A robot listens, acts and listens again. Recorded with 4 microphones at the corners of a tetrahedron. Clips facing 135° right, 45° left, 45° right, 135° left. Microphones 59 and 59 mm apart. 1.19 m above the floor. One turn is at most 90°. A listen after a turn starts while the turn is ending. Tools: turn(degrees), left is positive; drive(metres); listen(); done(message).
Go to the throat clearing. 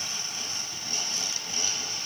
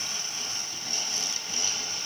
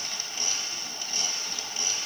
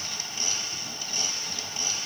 listen()
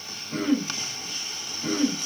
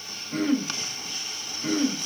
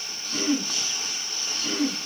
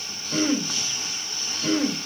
turn(degrees=90)
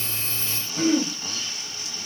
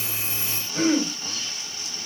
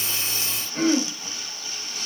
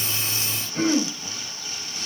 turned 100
turn(degrees=40)
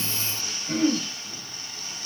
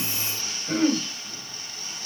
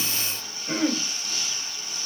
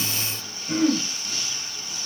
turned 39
drive(metres=1.0)
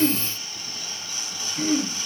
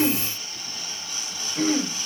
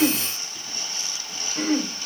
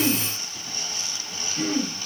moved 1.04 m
drive(metres=1.0)
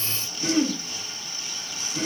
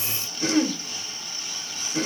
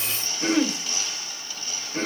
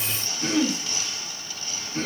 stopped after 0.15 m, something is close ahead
turn(degrees=10)
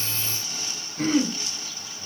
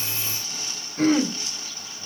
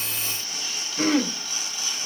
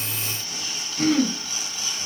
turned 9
done("I am next to the throat clearing.")